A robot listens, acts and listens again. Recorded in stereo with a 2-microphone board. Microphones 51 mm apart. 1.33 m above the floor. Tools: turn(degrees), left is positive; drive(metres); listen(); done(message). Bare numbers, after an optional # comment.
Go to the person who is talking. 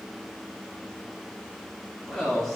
turn(30)
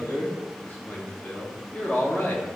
# So it is at 145° left.
turn(145)
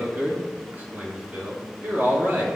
# The man speaking is now 35° right.
turn(-35)
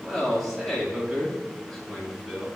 drive(1.0)
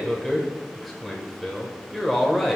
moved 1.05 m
drive(1.0)
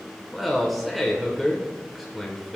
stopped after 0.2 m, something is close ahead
done("I am next to the man speaking.")